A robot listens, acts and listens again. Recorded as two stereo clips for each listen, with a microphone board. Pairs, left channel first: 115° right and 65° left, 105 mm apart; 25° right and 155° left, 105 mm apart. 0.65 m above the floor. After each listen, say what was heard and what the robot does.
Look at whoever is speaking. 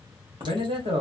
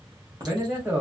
The man speaking: 80° left. Turn 80° left.
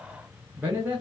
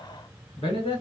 Found it: a man speaking, straight ahead.